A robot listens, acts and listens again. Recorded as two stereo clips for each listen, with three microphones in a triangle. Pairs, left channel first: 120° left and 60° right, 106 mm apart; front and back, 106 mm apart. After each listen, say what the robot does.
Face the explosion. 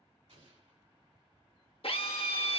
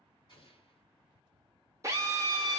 Turn 40° right.
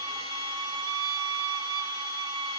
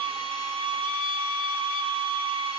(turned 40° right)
I heard an explosion from this way, but can't make it out now.